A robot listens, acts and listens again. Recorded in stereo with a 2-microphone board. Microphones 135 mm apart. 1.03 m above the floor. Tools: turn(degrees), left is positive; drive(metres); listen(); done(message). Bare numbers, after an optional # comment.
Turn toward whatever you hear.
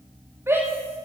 # The shout: about 20° right or 160° right.
turn(-20)
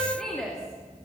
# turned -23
done("Facing the shout, 2 to 4 m away.")